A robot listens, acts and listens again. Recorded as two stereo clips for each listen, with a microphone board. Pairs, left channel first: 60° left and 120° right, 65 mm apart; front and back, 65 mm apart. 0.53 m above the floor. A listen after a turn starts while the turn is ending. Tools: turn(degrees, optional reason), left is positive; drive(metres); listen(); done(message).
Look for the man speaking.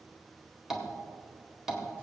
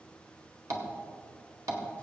listen()
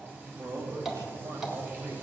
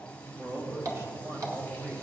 turn(degrees=-135, reason="The man speaking: 135° right.")
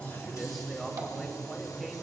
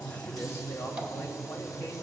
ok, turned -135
turn(degrees=-30, reason="The man speaking is now 30° right.")
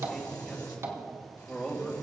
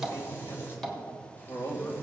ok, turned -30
turn(degrees=-15, reason="The man speaking is now 15° right.")
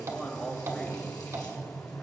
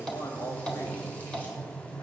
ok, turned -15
done("Facing the man speaking, 2 to 4 m away.")